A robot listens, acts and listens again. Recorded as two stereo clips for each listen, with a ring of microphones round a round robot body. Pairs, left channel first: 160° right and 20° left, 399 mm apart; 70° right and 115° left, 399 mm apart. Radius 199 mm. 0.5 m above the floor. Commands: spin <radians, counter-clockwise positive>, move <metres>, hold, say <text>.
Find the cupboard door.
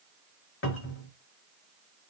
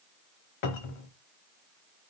spin -1.66
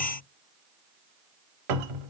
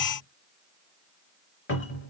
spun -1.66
say Facing the cupboard door, under 1 m away.